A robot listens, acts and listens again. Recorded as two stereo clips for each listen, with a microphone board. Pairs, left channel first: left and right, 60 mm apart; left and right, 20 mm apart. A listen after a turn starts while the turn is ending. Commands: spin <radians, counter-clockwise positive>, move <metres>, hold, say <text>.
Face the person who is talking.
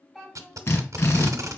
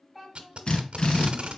spin 0.52
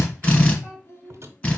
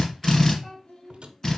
spin 2.27
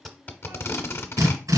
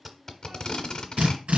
hold
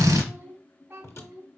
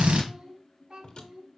spin -0.61
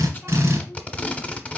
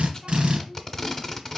hold
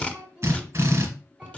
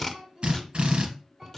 spin -0.17
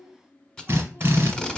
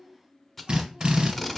hold
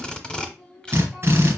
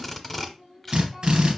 say Found it: a child speaking, straight ahead, 2 to 4 m away.